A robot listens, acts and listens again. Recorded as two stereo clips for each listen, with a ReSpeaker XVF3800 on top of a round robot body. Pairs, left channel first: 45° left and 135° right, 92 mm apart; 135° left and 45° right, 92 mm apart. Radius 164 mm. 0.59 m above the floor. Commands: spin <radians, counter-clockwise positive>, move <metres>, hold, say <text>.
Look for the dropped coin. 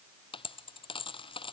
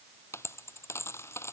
spin 1.31
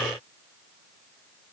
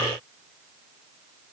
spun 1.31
say Facing where the dropped coin came from. I can't hear it now.